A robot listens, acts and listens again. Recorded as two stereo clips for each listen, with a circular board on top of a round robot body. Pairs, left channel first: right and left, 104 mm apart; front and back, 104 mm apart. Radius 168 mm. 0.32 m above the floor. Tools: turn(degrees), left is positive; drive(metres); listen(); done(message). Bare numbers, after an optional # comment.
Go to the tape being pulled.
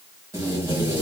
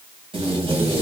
# The tape being pulled: 155° left.
turn(155)
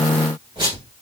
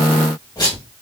# The tape being pulled is now 50° left.
turn(50)
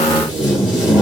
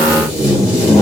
# The tape being pulled is now 10° left.
turn(10)
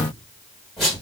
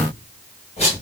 drive(1.0)
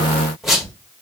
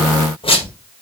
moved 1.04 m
drive(1.0)
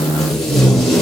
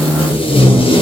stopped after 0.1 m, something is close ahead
done("I am next to the tape being pulled.")